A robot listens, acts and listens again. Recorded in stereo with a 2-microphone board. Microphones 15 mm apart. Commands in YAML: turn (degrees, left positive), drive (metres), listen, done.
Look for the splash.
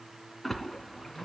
turn: 30
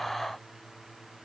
listen: true
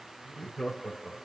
done: "I heard a splash, but can't make it out now. It was about 15° right or 135° left."